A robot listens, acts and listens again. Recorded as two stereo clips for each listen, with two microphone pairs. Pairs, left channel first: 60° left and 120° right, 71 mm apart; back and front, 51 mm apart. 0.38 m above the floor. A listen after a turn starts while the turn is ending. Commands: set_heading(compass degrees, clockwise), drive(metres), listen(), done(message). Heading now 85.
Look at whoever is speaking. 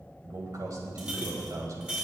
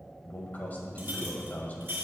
set_heading(220)
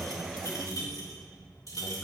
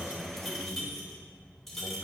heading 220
done("Facing the man speaking.")